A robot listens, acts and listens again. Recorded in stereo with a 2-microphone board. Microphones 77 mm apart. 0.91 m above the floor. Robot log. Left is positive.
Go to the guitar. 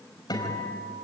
note: The guitar: about 60° left or 120° left.
cmd yaw +60
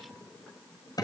note: So it is at 60° left.
cmd yaw +60
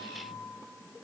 note: The guitar is now 20° left.
cmd yaw +20
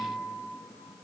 cmd fwd 1.0
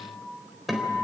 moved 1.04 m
cmd fwd 1.0
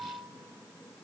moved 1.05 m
cmd idle
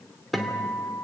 cmd fwd 1.0
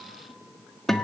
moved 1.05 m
cmd fwd 1.0
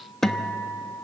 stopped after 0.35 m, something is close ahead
end: I am next to the guitar.